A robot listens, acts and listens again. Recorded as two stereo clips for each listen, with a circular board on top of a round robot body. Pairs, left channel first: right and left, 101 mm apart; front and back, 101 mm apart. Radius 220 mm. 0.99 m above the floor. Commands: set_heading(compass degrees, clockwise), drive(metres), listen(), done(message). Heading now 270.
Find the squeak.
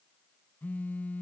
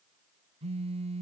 listen()
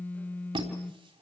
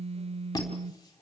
set_heading(215)
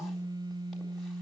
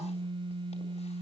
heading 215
listen()
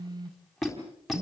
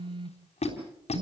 done("Facing the squeak.")